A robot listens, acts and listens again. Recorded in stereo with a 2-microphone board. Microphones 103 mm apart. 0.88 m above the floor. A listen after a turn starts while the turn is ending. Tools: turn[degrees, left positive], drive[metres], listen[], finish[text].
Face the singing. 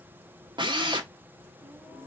Action: turn[30]
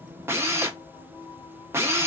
Thought: So it is at 125° left.
Action: turn[125]
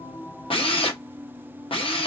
Thought: The singing is now 15° right.
Action: turn[-15]
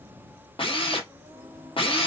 Thought: The singing is now 15° right.
Action: turn[-15]
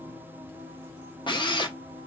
Action: finish[Facing the singing, 2 to 4 m away.]